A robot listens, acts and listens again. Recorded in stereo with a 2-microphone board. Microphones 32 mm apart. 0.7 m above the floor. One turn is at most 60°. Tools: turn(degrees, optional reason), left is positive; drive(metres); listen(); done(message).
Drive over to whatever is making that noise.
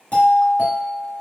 turn(degrees=50, reason="The doorbell: about 50° left or 130° left.")
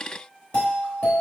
turn(degrees=60, reason="So it is at 65° left.")
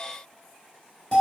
turn(degrees=30, reason="The doorbell is now 30° left.")
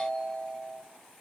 turn(degrees=10, reason="The doorbell is now 10° left.")
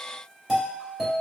drive(metres=1.0)
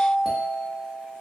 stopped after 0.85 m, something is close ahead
done("Arrived at the doorbell, straight ahead.")